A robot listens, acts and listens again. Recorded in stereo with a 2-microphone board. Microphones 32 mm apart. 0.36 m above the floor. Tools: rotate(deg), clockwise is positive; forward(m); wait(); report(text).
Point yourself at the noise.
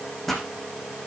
rotate(-30)
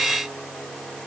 wait()
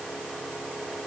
report("I heard a pop, but can't make it out now. It was about 20° right or 140° left.")